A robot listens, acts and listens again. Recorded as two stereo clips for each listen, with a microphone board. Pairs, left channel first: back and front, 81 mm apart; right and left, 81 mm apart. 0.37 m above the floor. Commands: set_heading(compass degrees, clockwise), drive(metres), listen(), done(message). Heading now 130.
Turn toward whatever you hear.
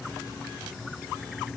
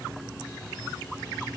listen()
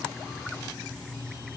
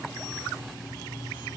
listen()
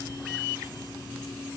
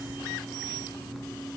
done("I can't make out anything to turn to.")